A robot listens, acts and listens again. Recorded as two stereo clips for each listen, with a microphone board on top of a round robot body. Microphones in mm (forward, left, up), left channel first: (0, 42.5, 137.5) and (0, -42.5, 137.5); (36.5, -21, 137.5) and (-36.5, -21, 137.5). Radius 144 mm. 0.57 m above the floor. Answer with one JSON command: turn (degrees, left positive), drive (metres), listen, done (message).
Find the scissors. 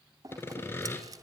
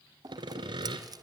{"turn": -140}
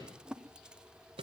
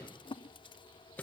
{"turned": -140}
{"turn": -10}
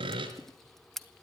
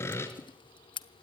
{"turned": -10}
{"done": "Found it: scissors, straight ahead."}